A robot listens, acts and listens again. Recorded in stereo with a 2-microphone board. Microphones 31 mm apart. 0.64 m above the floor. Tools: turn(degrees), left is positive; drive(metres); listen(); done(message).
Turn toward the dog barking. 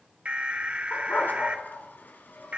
turn(degrees=90)
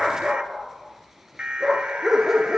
turn(degrees=-15)
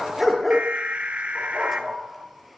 done("Found it: a dog barking, straight ahead, over 4 m away.")